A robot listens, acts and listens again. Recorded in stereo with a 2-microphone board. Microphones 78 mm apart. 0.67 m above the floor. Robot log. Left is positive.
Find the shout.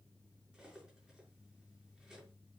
cmd idle
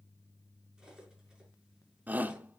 note: The shout: about 20° right or 160° right.
cmd yaw -20
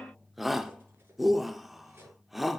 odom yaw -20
end: Facing the shout.